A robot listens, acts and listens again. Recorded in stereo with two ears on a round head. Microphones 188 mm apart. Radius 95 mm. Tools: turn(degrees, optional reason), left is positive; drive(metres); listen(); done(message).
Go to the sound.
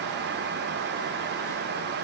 listen()
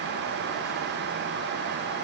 listen()
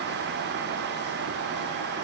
done("I can't make out anything to turn to.")